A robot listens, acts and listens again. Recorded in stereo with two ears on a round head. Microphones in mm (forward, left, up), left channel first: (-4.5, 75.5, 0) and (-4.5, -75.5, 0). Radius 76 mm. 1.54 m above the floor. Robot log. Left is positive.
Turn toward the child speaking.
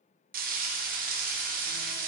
cmd idle
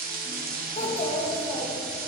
note: The child speaking: about 30° left or 150° left.
cmd yaw +30
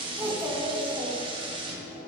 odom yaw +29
note: So it is at 20° right.
cmd yaw -20
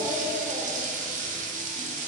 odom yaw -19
note: The child speaking is now 10° right.
cmd yaw -10
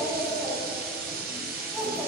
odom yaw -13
end: Facing the child speaking, 2 to 4 m away.